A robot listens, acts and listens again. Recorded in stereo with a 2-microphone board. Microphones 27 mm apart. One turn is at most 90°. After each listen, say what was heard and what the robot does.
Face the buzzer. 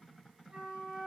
Keep listening.
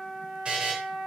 The buzzer: about 45° right or 135° right. Turn 45° right.
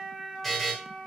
Facing the buzzer, 1 to 2 m away.